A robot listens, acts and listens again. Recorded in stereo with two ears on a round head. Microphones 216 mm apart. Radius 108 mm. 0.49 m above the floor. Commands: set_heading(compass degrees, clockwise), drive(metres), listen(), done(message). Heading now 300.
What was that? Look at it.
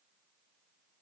listen()
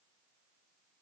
listen()
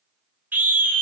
set_heading(330)
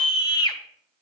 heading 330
set_heading(310)
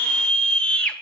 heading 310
done("Found it: a scream, straight ahead, 2 to 4 m away.")